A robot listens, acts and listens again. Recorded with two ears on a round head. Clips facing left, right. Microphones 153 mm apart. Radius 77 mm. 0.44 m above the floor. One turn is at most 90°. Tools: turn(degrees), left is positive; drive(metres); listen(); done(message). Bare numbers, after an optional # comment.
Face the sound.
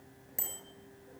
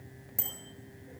turn(30)
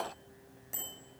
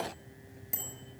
# So it is at 15° right.
turn(-15)
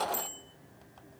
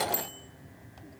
done("Found it: a bicycle bell, straight ahead, over 4 m away.")